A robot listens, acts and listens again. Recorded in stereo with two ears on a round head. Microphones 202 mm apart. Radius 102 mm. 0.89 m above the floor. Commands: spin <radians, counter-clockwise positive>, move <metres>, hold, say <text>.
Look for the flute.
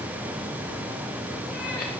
hold
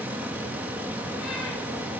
hold
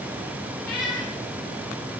say I can't make out a flute, only a cat meowing.